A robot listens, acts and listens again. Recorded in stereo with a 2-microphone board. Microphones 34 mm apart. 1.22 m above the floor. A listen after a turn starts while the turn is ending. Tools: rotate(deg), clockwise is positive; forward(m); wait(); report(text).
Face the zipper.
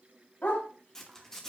rotate(-30)
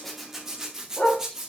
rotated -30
rotate(20)
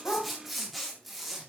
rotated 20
report("Facing the zipper.")